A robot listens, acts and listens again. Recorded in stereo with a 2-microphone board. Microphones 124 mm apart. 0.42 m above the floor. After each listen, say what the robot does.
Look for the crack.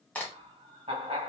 Turn 30° left.
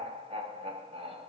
Keep listening.
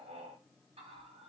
I heard a crack, but can't make it out now. It was about 15° right or 135° left.